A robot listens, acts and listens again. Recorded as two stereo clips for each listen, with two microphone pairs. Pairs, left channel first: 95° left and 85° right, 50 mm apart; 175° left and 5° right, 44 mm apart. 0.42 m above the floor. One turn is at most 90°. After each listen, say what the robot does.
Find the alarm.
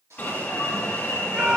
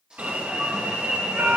Turn 40° left.
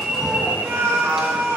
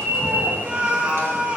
Turn 10° right.
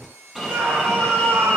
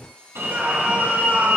Found it: an alarm, straight ahead.